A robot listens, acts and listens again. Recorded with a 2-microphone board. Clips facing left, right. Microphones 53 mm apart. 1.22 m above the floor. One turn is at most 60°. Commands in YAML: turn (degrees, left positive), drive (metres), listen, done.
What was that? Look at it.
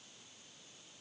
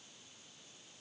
listen: true
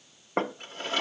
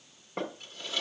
turn: 45
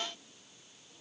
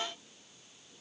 listen: true
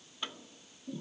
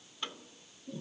done: "Found it: a drawer, straight ahead."